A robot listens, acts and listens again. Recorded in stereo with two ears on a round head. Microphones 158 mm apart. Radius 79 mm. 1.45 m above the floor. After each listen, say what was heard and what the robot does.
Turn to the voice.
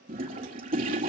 Keep listening.
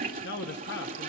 The man speaking: about 65° left or 115° left. Turn 65° left.
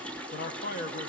So it is at 50° left. Turn 50° left.
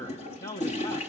The man speaking is now 20° left. Turn 20° left.
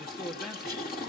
Keep listening.
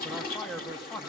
Facing the man speaking.